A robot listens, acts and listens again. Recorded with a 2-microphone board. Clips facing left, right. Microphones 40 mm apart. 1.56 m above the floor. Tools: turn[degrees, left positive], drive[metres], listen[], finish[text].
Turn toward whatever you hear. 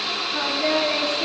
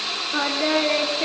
Thought: The singing: about 35° right or 145° right.
Action: turn[-35]
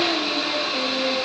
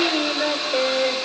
Thought: So it is at 120° right.
Action: turn[-120]
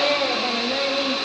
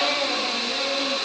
Thought: The singing is now 40° left.
Action: turn[40]
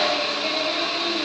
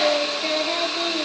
Thought: The singing is now 15° right.
Action: turn[-15]
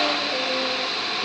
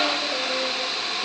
Action: listen[]
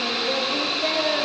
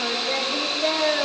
Thought: The singing is now 10° right.
Action: turn[-10]
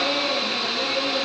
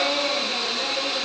Action: finish[Found it: singing, straight ahead.]